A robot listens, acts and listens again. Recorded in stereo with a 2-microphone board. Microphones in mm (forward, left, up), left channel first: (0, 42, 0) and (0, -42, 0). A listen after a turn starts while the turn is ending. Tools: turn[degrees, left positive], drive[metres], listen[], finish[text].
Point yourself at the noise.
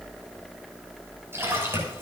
Thought: The splash: about 30° right or 150° right.
Action: turn[-30]
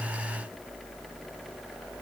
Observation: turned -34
Action: listen[]
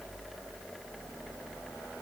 Action: finish[I heard a splash, but can't make it out now. It was about 5° left or 115° right.]